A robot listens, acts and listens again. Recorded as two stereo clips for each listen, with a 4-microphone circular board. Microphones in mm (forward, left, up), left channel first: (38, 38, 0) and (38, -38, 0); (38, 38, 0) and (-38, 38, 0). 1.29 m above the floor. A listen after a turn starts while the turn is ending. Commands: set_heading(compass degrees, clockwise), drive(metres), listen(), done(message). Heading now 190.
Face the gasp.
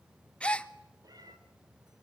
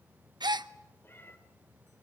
set_heading(25)
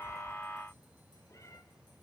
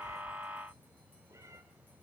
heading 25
done("I heard a gasp from this way, but can't make it out now.")